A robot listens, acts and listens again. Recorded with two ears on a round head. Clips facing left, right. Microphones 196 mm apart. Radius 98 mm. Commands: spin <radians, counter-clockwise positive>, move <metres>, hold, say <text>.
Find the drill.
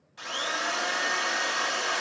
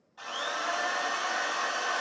spin 0.52
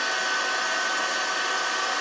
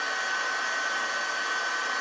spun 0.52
spin 2.01
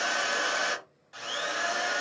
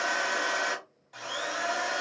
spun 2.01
spin 0.17
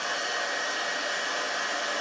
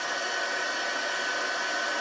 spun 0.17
say Facing the drill.